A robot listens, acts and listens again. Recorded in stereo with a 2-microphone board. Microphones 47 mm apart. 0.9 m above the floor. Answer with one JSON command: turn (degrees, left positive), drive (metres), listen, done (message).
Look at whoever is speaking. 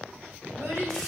{"turn": -60}
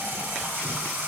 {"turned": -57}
{"listen": true}
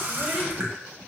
{"listen": true}
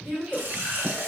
{"done": "Found it: a child speaking, straight ahead, 1 to 2 m away."}